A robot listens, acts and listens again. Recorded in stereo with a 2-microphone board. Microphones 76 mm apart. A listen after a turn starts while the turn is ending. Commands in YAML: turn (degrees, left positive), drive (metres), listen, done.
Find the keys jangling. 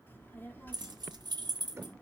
turn: -70
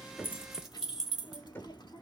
done: "Found it: keys jangling, straight ahead."